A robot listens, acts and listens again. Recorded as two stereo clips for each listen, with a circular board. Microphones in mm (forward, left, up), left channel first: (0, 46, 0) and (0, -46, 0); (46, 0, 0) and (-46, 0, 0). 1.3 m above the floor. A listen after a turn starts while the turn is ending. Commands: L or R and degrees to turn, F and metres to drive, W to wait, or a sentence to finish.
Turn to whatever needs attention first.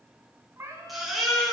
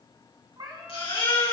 Facing the baby crying, over 4 m away.